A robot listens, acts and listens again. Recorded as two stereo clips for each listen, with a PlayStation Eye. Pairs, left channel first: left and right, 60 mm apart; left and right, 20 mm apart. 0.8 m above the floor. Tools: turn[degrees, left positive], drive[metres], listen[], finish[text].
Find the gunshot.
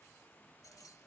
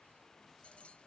Action: listen[]
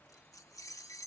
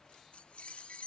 Action: listen[]
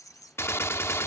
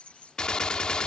Thought: The gunshot: about 45° left or 135° left.
Action: turn[45]
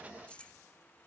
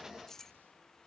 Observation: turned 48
Action: listen[]
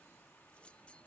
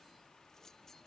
Action: finish[I heard a gunshot, but can't make it out now. It was about straight ahead or 85° left.]